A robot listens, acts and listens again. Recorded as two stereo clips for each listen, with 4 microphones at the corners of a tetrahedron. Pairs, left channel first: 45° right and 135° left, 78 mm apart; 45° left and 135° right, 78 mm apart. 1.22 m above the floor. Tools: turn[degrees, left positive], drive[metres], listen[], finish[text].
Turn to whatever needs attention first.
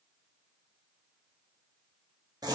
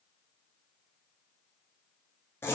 Action: listen[]
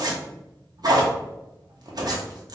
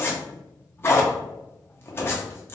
Action: listen[]
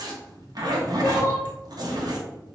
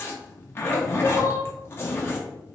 Thought: The crying: 10° left.
Action: turn[10]
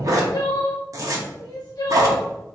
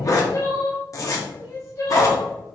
Action: finish[Found it: crying, straight ahead.]